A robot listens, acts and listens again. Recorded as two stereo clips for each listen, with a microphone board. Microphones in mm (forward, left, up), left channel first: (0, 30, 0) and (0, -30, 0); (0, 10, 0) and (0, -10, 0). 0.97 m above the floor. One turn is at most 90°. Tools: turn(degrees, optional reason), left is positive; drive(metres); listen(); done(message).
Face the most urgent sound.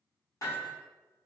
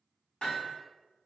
listen()
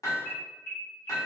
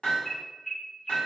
turn(degrees=50, reason="The alarm: about 50° left or 130° left.")
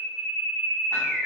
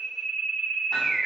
done("Facing the alarm.")